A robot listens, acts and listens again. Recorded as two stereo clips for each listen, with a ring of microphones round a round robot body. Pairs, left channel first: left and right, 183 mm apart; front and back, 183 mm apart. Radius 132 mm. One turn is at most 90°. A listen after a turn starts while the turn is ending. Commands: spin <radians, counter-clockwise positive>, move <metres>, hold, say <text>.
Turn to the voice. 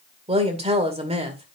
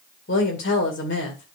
spin -0.61
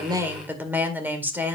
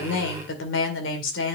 spin -0.17
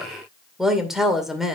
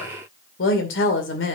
say Facing the woman speaking.